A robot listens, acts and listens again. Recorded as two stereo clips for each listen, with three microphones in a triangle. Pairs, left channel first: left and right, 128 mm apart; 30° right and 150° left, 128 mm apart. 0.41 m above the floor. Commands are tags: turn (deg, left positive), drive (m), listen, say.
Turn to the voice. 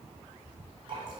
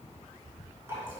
<listen/>
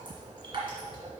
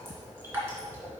<listen/>
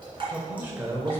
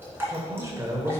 <turn deg="-150"/>
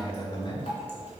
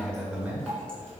<turn deg="80"/>
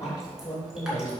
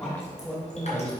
<turn deg="50"/>
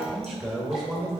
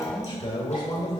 <say>Facing the man speaking, 1 to 2 m away.</say>